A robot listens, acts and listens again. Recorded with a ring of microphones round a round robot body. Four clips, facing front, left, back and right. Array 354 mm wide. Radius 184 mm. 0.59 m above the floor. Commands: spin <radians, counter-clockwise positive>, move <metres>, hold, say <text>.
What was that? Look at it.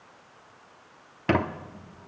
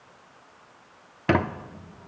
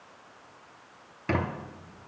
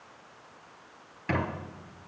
spin 0.96
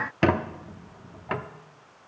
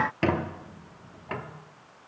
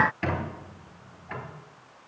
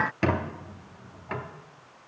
say Found it: a squeak, straight ahead.